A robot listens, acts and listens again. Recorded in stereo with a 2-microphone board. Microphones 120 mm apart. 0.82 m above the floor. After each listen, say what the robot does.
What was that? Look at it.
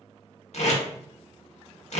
Turn 65° left.
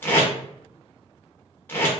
Turn 20° left.
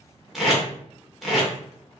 Found it: tape being pulled, straight ahead, under 1 m away.